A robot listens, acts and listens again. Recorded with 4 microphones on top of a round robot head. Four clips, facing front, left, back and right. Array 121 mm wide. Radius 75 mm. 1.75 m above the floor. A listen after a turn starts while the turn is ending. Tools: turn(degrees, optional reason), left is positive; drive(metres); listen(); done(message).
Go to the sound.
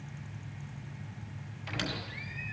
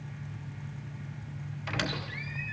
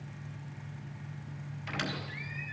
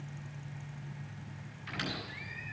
turn(degrees=80, reason="The squeak: 80° left.")
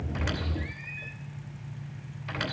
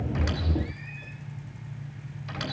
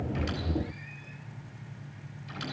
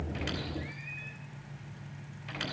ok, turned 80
turn(degrees=15, reason="The squeak is now 15° left.")
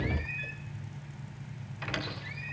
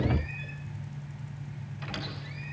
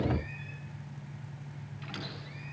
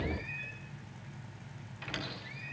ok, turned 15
drive(metres=1.0)
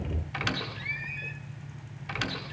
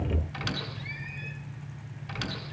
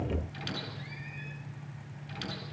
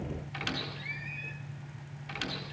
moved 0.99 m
drive(metres=1.0)
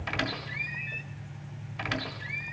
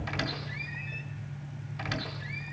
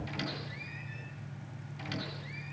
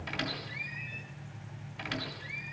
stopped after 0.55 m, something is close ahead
turn(degrees=10, reason="The squeak is now 10° left.")
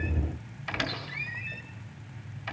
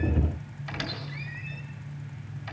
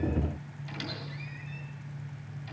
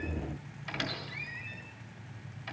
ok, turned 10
done("I am next to the squeak.")